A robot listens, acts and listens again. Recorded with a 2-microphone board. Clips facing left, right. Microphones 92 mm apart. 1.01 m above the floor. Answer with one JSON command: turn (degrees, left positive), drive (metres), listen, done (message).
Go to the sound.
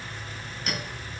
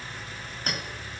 {"turn": -40}
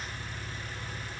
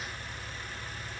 {"listen": true}
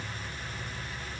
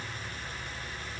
{"listen": true}
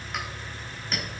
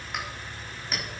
{"drive": 1.0}
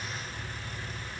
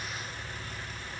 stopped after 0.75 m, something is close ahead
{"listen": true}
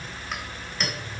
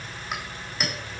{"done": "Blocked. The clink is further on, straight ahead."}